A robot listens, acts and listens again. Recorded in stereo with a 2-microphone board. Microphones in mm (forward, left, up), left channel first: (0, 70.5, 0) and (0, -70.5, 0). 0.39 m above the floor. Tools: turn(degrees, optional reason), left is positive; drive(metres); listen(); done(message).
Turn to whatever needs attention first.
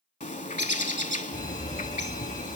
turn(degrees=30, reason="The fire alarm: about 30° left or 150° left.")
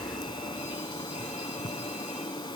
listen()
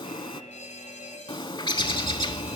turn(degrees=120, reason="So it is at 120° left.")
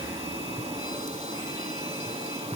listen()
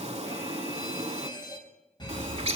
turn(degrees=35, reason="The fire alarm is now 35° left.")
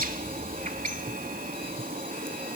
turn(degrees=10, reason="The fire alarm is now 10° left.")
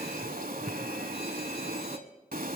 listen()
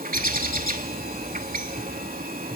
done("Found it: a fire alarm, straight ahead.")